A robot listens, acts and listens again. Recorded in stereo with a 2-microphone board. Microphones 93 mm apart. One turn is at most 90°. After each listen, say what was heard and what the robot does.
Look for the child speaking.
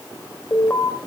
Keep listening.
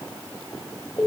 Keep listening.
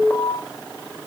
I can't make out a child speaking to turn to.